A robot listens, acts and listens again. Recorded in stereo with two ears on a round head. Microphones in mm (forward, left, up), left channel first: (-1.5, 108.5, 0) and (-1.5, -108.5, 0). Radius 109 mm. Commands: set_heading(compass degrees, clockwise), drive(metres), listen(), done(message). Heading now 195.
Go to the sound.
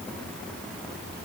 listen()
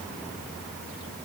listen()
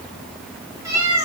set_heading(225)
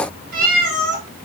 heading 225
set_heading(0)
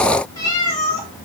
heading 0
set_heading(345)
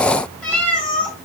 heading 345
drive(1.0)
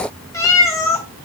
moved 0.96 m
set_heading(330)
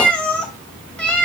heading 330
drive(1.0)
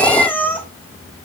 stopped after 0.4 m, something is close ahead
set_heading(320)
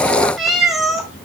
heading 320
done("I am next to the cat meowing.")